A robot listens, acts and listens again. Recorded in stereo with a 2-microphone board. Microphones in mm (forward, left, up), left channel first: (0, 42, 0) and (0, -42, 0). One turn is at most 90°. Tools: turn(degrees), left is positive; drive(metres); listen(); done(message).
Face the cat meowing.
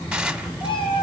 turn(degrees=90)
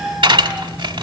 done("Found it: a cat meowing, straight ahead, 2 to 4 m away.")